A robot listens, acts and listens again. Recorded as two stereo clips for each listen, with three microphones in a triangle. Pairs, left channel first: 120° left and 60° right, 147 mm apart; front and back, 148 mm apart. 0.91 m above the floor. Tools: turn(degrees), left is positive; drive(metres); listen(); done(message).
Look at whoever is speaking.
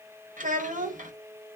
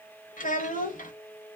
turn(degrees=-30)
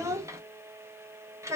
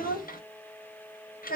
turn(degrees=10)
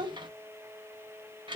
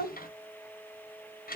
done("Found it: a child speaking, straight ahead.")